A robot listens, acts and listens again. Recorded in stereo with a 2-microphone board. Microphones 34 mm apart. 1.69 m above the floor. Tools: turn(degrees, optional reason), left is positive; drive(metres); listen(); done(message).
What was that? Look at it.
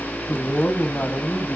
turn(degrees=60, reason="The man speaking: about 60° left or 120° left.")
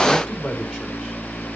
listen()
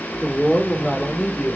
turn(degrees=30, reason="So it is at 30° left.")
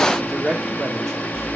turn(degrees=10, reason="The man speaking is now 10° left.")
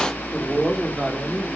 done("Found it: a man speaking, straight ahead.")